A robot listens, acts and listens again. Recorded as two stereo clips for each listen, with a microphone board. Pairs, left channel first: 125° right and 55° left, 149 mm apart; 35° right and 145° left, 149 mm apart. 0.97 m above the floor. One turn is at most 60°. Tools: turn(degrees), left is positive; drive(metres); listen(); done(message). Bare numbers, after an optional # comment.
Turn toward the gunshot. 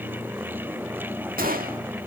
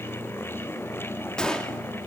# The gunshot: 50° left.
turn(50)
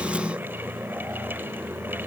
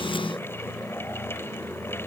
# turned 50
done("Facing where the gunshot came from. I can't hear it now.")